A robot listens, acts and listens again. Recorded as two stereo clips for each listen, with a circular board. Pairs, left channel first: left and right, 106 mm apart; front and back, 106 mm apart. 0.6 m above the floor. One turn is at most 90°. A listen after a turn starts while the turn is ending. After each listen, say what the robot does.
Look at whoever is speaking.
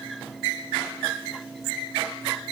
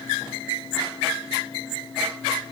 Keep listening.
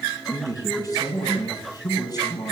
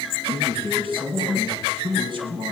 Turn 90° left.
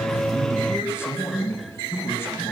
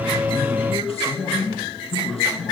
Turn 25° left.
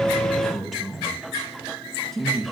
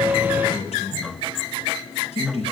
Found it: a man speaking, straight ahead, over 4 m away.